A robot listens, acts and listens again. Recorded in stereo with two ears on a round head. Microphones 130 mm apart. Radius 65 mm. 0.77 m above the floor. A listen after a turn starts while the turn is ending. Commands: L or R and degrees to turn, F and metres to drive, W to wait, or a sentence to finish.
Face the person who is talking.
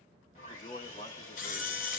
L40
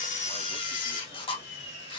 W
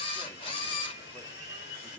Facing the man speaking, 1 to 2 m away.